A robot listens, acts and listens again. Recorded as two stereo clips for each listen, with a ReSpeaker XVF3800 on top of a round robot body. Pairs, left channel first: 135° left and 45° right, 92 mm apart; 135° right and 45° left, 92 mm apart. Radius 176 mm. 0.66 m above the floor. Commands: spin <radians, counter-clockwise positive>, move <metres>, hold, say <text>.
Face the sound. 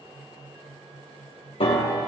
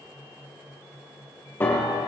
spin 2.71
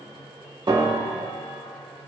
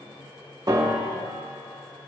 say Facing the piano, 2 to 4 m away.